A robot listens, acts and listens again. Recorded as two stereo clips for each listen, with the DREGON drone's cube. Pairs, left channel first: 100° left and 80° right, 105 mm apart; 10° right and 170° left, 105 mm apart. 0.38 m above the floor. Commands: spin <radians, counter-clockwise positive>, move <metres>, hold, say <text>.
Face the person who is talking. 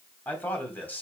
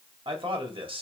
spin 2.97
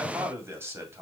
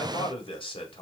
spin -0.35
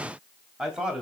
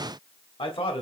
say Found it: a man speaking, straight ahead, 2 to 4 m away.